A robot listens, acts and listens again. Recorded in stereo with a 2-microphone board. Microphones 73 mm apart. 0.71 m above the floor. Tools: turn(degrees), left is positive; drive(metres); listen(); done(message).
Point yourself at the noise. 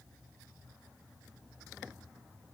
listen()
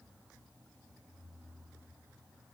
listen()
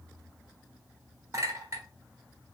turn(degrees=-40)
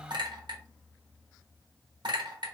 turn(degrees=-95)
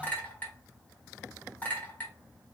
turn(degrees=20)
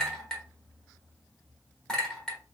done("Facing the clink, 1 to 2 m away.")